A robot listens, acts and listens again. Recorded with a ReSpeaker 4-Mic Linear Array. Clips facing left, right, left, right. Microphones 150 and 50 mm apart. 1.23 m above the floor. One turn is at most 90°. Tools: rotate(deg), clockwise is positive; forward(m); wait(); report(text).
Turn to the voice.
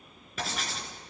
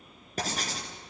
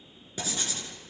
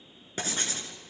wait()
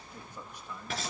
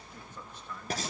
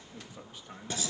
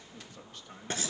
rotate(-30)
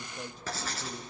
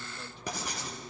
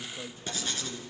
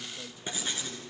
rotate(-90)
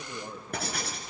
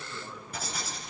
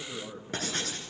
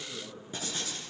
rotate(-40)
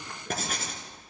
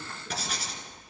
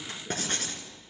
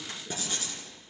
wait()
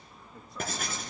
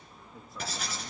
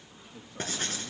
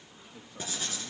report("Found it: a man speaking, straight ahead.")